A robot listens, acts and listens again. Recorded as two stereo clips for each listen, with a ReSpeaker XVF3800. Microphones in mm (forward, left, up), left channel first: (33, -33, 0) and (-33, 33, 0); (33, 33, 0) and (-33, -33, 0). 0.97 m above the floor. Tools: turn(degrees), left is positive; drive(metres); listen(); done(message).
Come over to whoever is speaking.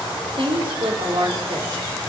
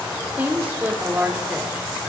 turn(degrees=155)
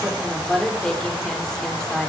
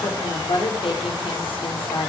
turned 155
turn(degrees=40)
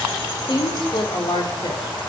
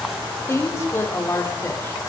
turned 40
turn(degrees=-15)
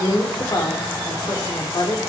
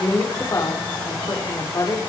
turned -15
drive(metres=1.0)
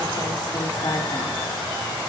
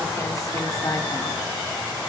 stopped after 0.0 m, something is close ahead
listen()
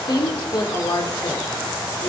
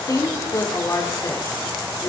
done("Blocked. The woman speaking is further on, straight ahead.")